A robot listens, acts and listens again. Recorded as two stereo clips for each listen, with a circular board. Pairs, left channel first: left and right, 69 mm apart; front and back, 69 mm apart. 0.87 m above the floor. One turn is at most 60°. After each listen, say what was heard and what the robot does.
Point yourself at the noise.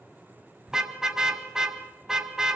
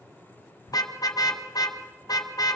The car horn: 10° right. Turn 10° right.
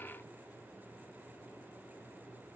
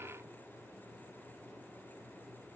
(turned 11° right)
Keep listening.
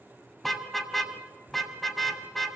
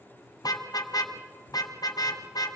Found it: a car horn, straight ahead, 2 to 4 m away.